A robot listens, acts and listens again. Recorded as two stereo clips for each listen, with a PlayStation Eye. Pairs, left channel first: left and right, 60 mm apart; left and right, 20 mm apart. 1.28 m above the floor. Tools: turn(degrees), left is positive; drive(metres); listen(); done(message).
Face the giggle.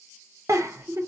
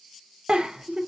turn(degrees=-60)
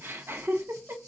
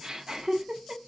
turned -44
turn(degrees=-50)
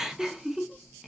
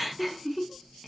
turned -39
turn(degrees=-10)
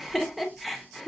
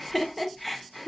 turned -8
done("Found it: a giggle, straight ahead.")